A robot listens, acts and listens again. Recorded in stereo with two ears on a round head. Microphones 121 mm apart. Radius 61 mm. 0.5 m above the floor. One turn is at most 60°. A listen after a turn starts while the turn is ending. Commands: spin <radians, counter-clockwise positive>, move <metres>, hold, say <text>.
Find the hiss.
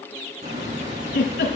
spin -0.96
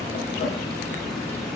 say Facing the hiss, 2 to 4 m away.